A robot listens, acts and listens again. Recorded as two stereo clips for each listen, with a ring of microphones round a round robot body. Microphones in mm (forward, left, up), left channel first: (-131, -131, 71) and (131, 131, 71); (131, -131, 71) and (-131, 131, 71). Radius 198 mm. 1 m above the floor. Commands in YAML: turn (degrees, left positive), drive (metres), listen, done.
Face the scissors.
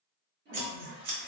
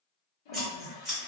turn: 45
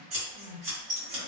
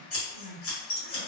turn: 10
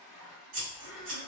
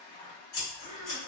done: "Found it: scissors, straight ahead, 1 to 2 m away."